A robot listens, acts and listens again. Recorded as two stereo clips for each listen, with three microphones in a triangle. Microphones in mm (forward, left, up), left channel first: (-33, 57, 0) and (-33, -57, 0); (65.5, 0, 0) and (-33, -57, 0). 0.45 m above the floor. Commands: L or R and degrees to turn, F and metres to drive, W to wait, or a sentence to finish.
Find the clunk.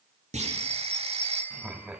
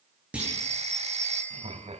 R70
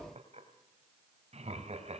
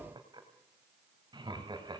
Facing where the clunk came from. I can't hear it now.